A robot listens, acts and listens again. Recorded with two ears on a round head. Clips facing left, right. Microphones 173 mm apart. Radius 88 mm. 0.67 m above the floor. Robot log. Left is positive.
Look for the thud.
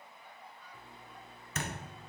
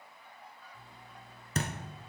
note: The thud: about 30° right or 150° right.
cmd yaw -30
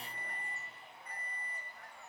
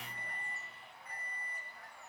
cmd idle
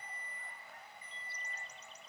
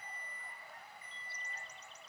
end: I heard a thud, but can't make it out now. It was about straight ahead or 120° right.